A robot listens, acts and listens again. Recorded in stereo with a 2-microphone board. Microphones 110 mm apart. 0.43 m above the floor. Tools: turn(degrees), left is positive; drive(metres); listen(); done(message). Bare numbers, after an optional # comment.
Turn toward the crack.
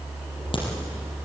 # The crack: about 50° left or 130° left.
turn(50)
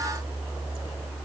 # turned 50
listen()
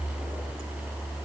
done("I heard a crack, but can't make it out now. It was about straight ahead or 80° left.")